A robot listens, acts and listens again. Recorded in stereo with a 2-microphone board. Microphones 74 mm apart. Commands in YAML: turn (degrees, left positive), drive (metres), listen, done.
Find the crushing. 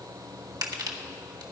turn: -60
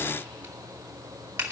turn: -25
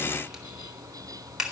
done: "Facing the crushing, 1 to 2 m away."